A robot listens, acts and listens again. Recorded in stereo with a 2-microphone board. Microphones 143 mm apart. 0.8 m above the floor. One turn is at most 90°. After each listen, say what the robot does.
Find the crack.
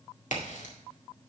Turn 60° left.
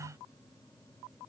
Keep listening.
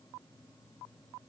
I heard a crack, but can't make it out now. It was about straight ahead or 60° left.